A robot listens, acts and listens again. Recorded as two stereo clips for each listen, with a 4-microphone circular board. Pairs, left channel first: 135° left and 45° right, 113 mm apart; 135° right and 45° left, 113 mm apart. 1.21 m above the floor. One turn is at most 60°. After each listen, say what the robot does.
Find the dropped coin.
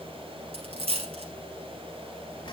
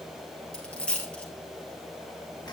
Turn 55° right.
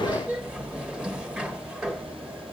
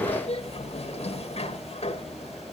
Facing where the dropped coin came from. I can't hear it now.